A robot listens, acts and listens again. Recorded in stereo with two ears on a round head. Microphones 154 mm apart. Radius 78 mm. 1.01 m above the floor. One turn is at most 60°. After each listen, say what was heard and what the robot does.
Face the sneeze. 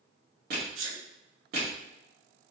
Turn 60° right.
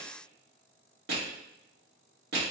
Nothing new. It was at 30° right. Turn 30° right.
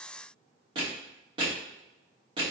Facing where the sneeze came from. I can't hear it now.